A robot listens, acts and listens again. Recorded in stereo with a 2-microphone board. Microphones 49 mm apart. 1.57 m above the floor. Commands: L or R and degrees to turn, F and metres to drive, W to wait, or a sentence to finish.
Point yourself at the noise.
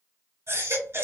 R60
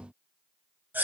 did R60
R45
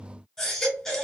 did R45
L10
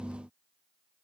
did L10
W
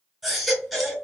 Found it: a baby crying, straight ahead.